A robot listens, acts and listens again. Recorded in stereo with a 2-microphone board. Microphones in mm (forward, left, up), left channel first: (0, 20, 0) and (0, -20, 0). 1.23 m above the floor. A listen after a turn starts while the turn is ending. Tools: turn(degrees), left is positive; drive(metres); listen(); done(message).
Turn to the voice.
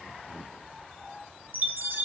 listen()
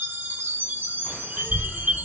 turn(degrees=70)
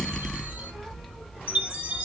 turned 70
done("Found it: a child speaking, straight ahead, 1 to 2 m away.")